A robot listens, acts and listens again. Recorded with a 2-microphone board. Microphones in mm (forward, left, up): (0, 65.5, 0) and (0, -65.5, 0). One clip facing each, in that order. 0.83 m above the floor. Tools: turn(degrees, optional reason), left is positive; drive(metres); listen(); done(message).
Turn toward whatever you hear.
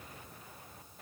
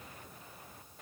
listen()
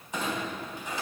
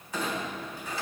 turn(degrees=20, reason="The clunk: about 20° left or 160° left.")
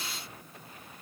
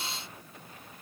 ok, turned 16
listen()
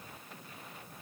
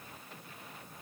done("I heard a clunk, but can't make it out now. It was about 5° left or 145° left.")